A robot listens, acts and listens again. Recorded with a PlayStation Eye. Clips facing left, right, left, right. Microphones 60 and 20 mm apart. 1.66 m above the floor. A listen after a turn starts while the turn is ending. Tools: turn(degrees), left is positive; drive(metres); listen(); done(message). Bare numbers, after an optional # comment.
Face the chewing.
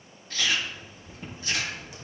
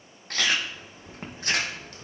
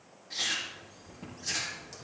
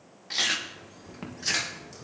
# The chewing: about 65° right or 115° right.
turn(-65)
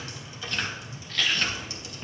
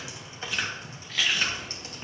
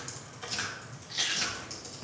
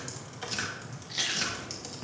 # So it is at 10° right.
turn(-10)
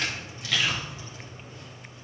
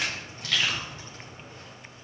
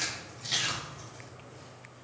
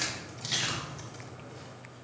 done("Facing the chewing.")